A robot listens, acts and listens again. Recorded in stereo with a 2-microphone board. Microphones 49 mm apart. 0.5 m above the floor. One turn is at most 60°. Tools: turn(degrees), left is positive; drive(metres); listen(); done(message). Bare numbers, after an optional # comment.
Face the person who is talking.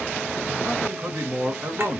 # The man speaking: about 60° right or 120° right.
turn(-60)
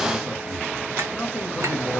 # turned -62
# So it is at 15° right.
turn(-15)
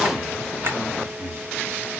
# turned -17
done("Facing the man speaking.")